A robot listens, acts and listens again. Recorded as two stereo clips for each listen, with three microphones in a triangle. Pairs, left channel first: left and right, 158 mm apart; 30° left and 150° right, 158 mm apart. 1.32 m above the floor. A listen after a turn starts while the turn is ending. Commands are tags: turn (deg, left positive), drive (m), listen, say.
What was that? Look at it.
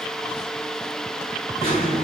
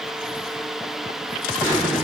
<turn deg="135"/>
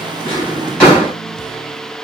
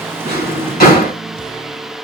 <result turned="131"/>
<say>Found it: a drawer, straight ahead, 2 to 4 m away.</say>